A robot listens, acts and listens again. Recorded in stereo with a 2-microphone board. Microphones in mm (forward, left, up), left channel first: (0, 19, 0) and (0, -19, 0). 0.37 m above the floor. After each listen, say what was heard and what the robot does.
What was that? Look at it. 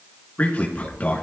The man speaking: about 45° left or 135° left. Turn 45° left.
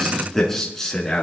So it is at 15° left. Turn 15° left.
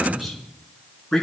Found it: a man speaking, straight ahead.